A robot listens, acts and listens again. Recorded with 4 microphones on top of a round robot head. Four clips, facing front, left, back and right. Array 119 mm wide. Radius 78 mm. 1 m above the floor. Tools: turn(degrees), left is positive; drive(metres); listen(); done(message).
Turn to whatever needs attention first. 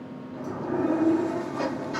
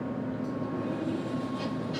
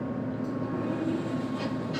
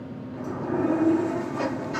listen()
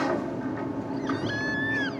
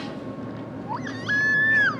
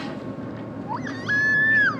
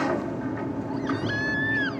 turn(degrees=140)
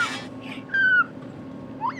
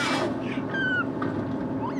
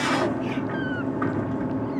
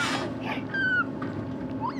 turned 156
turn(degrees=-15)
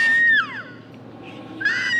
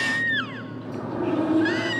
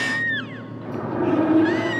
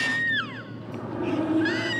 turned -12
done("Facing the baby crying.")